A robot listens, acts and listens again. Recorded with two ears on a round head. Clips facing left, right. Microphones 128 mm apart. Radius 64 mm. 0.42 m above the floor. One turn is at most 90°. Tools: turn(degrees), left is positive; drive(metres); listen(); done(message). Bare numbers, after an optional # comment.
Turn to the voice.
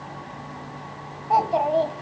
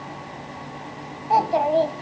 turn(30)
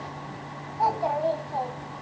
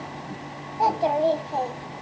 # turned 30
# So it is at 30° right.
turn(-30)
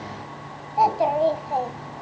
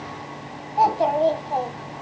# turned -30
done("Facing the child speaking.")